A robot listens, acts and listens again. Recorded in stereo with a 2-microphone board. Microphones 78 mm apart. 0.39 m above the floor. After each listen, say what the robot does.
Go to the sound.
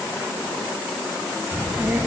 Turn 25° right.
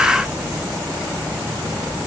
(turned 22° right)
Turn 130° right.
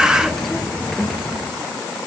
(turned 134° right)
Drive 1.0 m forward.
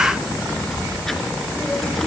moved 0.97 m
Drive 1.0 m forward.
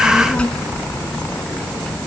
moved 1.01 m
Turn 15° left.
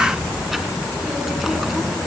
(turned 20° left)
Drive 1.0 m forward.
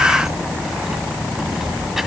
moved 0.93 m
Drive 1.0 m forward.
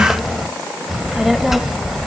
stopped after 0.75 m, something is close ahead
I am next to the child speaking.